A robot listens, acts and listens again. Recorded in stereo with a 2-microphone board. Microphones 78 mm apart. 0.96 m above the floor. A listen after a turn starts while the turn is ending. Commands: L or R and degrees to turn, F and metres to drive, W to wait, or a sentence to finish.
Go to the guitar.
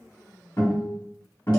L45
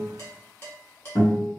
L90
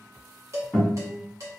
L10
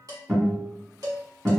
F1.0
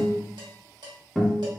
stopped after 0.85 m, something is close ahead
Arrived at the guitar, straight ahead.